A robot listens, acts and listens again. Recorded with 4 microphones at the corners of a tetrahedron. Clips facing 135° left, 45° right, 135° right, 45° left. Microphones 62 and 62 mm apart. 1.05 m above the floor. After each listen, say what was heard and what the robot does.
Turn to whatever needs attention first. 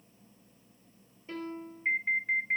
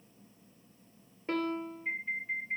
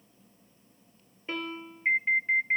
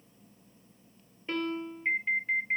The alarm: 155° left. Turn 155° left.
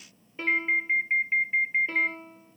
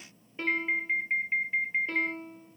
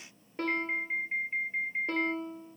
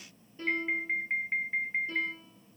The alarm is now 60° left. Turn 60° left.
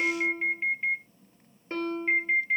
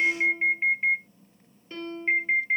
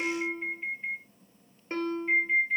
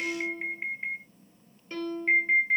The alarm is now 20° left. Turn 20° left.
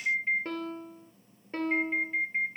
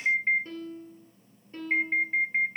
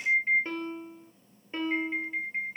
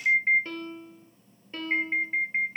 Facing the alarm, under 1 m away.